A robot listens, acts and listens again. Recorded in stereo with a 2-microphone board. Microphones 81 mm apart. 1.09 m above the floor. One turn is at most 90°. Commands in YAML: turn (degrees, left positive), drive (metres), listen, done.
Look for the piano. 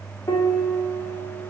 turn: 45
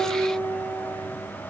turn: 85
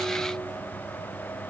listen: true
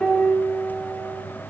done: "Facing the piano."